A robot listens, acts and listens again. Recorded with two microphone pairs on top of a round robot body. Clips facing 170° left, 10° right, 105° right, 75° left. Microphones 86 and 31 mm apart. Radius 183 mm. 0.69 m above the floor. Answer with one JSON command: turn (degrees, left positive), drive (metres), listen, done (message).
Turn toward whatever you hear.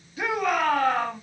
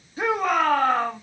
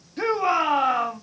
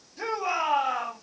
{"turn": -70}
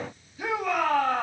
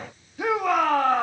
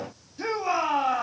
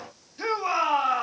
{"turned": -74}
{"done": "Facing the shout, 2 to 4 m away."}